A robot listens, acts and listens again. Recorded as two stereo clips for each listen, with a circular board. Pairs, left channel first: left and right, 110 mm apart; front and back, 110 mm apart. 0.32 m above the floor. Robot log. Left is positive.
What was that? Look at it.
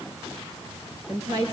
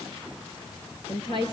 note: The woman speaking: 35° right.
cmd yaw -35
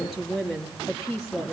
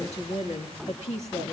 end: Found it: a woman speaking, straight ahead, over 4 m away.